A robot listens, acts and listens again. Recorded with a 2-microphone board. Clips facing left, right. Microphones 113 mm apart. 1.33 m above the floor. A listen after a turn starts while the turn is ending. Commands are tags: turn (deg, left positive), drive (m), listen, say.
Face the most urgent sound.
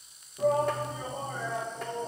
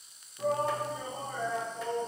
<turn deg="75"/>
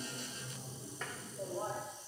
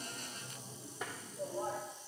<turn deg="30"/>
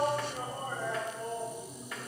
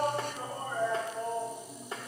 <turn deg="15"/>
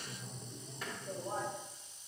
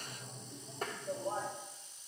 <say>Found it: a shout, straight ahead, 1 to 2 m away.</say>